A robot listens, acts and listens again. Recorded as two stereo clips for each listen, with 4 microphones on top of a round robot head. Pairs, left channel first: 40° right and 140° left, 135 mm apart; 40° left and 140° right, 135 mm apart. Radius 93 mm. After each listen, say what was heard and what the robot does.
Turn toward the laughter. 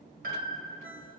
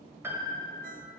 Keep listening.
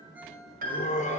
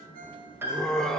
The laughter: 45° right. Turn 45° right.
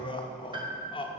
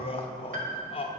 Facing the laughter, 1 to 2 m away.